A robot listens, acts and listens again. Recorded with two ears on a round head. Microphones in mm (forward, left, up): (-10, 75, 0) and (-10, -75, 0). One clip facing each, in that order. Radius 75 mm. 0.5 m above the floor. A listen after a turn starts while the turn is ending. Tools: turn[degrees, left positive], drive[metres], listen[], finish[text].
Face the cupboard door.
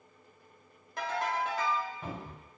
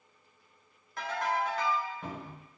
Action: turn[30]
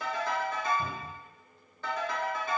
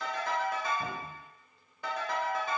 Thought: So it is at 145° left.
Action: turn[145]
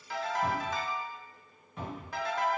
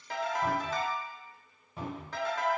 Thought: The cupboard door is now 30° right.
Action: turn[-30]
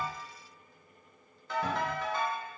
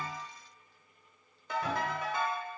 Action: listen[]
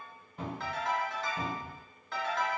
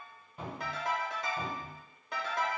Action: finish[Found it: a cupboard door, straight ahead.]